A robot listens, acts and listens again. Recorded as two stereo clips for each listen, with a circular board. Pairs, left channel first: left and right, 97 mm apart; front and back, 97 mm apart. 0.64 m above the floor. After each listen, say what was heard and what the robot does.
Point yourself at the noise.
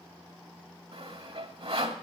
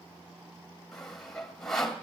The sawing: 85° right. Turn 85° right.
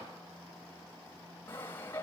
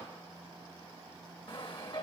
The sawing is now 25° left. Turn 25° left.
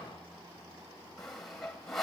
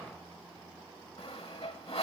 Found it: sawing, straight ahead.